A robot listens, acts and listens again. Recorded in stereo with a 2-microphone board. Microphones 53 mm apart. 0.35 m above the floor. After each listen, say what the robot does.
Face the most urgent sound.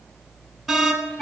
Turn 30° left.
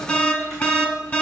Turn 145° left.
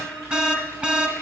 Turn 30° right.
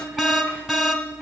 Turn 10° right.
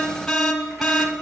Facing the alarm.